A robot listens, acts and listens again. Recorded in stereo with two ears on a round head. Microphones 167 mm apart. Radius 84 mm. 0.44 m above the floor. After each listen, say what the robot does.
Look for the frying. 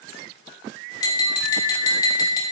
Keep listening.
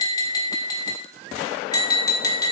Keep listening.
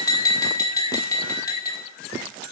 I can't make out frying, only tapping.